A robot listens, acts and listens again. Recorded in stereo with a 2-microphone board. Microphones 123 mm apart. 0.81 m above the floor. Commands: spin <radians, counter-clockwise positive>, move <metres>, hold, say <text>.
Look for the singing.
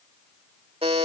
hold
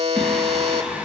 spin -0.52
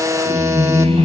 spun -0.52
spin -2.01
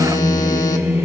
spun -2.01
spin -0.35
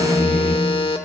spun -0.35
say Facing the singing, 2 to 4 m away.